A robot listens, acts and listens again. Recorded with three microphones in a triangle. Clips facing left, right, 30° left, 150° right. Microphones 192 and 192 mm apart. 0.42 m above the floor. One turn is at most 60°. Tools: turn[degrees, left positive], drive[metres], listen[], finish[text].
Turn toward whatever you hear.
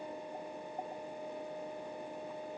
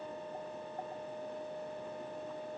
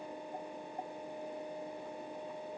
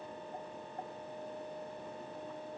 Action: listen[]
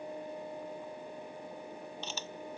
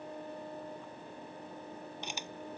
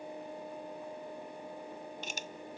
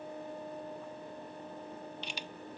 Thought: The camera shutter: 15° right.
Action: turn[-15]
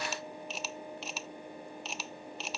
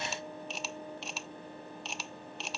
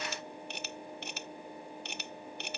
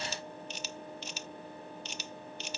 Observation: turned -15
Action: finish[Found it: a camera shutter, straight ahead.]